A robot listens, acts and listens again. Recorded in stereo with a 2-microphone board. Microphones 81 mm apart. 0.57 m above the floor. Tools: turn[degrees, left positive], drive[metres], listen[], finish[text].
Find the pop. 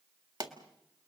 Thought: The pop: about 60° right or 120° right.
Action: turn[-60]
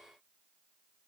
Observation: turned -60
Action: listen[]
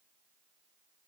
Action: finish[I heard a pop, but can't make it out now. It was about straight ahead or 60° right.]